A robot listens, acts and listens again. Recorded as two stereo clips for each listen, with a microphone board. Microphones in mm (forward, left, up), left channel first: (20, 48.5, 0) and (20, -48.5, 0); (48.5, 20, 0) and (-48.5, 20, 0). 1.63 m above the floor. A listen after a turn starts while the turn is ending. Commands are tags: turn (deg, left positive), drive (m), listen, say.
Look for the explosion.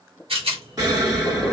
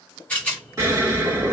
<turn deg="-130"/>
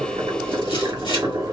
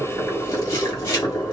<say>Facing where the explosion came from. I can't hear it now.</say>